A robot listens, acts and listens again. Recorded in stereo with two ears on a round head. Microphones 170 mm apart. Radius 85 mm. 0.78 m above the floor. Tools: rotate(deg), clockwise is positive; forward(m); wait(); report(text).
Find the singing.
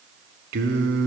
rotate(65)
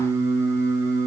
rotate(15)
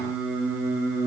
rotate(10)
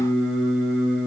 report("Found it: singing, straight ahead.")